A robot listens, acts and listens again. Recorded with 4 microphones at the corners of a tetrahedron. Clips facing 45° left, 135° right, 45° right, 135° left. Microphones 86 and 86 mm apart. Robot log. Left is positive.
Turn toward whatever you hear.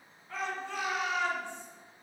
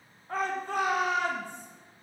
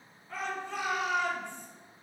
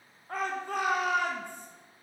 note: The shout: 175° left.
cmd yaw +175
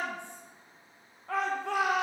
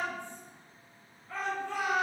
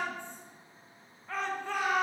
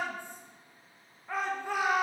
note: The shout is now 55° left.
cmd yaw +55
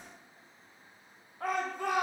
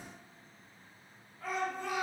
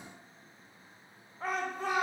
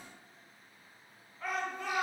note: The shout is now 15° left.
cmd yaw +15
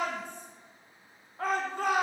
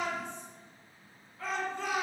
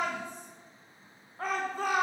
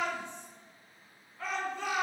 end: Found it: a shout, straight ahead.